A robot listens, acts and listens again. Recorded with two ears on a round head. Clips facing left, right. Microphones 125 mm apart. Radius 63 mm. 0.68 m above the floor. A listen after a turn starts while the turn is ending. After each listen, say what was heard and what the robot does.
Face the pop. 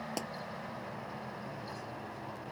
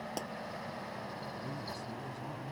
Turn 30° left.
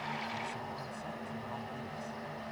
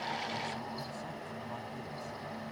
Keep listening.
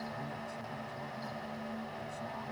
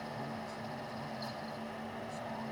I heard a pop, but can't make it out now. It was about 20° right or 140° left.